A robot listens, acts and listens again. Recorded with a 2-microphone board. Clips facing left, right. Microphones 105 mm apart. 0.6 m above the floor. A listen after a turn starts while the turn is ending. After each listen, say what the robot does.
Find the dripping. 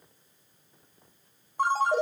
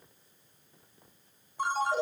Keep listening.
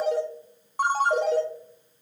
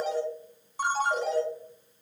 Keep listening.
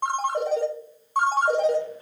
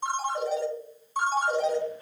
I can't make out dripping to turn to.